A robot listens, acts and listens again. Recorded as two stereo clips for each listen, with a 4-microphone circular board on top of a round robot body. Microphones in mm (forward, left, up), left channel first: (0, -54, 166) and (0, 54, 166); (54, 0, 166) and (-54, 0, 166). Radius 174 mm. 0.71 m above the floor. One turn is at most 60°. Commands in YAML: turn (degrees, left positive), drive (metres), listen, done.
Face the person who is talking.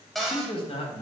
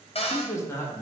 turn: -60
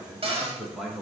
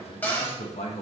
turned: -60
done: "Facing the man speaking."